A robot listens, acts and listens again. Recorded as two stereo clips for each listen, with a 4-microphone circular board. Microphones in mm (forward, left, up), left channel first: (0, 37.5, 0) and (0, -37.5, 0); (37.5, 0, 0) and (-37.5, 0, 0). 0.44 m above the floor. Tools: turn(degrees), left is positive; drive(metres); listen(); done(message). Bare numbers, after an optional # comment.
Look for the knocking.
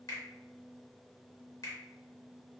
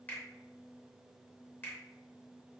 listen()
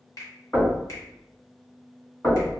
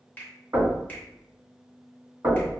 # The knocking: 145° left.
turn(145)
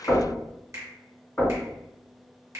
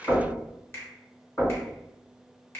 # The knocking is now 35° left.
turn(35)
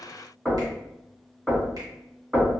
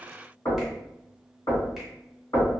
# The knocking is now 10° right.
turn(-10)
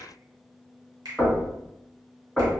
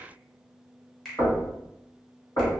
done("Found it: knocking, straight ahead.")